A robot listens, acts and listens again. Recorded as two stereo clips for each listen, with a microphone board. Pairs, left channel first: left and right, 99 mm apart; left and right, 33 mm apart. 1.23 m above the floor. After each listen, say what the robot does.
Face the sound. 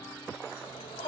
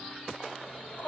Turn 70° left.
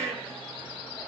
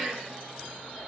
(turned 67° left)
Facing the shout.